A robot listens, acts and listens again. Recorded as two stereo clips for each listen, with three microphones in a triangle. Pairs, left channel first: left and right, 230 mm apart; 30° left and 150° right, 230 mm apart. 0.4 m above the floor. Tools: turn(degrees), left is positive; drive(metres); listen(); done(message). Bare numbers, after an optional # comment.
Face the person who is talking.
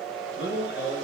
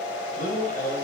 # The man speaking: 75° left.
turn(75)
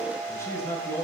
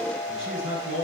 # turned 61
# The man speaking is now 15° left.
turn(15)
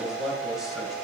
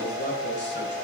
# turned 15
done("Found it: a man speaking, straight ahead, 2 to 4 m away.")